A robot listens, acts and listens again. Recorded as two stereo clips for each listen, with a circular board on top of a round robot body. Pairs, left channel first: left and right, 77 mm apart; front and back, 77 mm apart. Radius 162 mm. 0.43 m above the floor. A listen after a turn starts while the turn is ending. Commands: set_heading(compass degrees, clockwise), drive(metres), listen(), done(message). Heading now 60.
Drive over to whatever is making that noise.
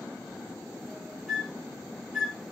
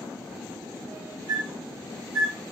drive(1.0)
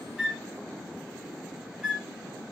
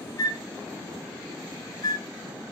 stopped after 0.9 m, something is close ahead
set_heading(75)
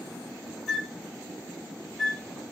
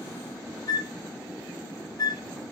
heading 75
done("Arrived at the flute, straight ahead.")